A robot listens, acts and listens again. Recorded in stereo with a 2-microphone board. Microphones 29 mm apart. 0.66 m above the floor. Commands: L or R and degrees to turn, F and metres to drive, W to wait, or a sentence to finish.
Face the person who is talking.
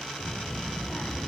L55
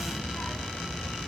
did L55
L70
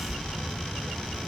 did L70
Found it: a child speaking, straight ahead, 2 to 4 m away.